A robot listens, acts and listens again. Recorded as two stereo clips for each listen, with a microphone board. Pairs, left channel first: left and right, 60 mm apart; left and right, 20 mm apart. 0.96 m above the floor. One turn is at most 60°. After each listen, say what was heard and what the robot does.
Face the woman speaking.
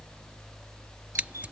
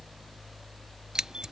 Keep listening.
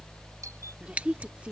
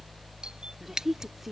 The woman speaking: about 20° right or 160° right. Turn 20° right.
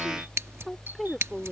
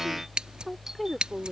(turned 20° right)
Facing the woman speaking.